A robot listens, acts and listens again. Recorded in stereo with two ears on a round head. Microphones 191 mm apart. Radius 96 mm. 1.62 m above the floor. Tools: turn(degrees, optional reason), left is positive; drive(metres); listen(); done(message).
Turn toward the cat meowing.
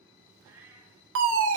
turn(degrees=-30)
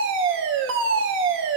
listen()
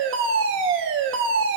listen()
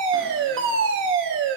done("I heard a cat meowing, but can't make it out now. It was about 20° left or 140° right.")